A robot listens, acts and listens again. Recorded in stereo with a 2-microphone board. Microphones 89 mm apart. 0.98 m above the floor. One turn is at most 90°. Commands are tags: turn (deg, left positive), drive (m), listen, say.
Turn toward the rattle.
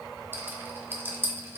<turn deg="-25"/>
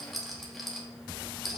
<say>Facing the rattle, 1 to 2 m away.</say>